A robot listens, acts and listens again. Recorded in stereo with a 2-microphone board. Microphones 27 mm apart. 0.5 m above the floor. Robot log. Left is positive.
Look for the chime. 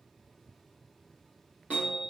note: The chime: about 65° right or 115° right.
cmd yaw -65
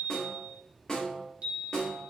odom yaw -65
note: So it is at 45° right.
cmd yaw -45
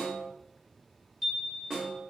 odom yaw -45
end: Facing the chime, 2 to 4 m away.